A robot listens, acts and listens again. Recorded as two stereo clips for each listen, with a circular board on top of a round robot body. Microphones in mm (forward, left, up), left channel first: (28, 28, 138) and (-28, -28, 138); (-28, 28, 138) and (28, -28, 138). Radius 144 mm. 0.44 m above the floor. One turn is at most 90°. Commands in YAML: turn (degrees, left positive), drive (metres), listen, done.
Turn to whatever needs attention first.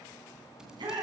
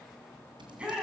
turn: -90
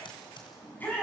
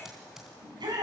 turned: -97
turn: -20
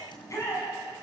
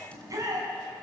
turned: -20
done: "Facing the shout."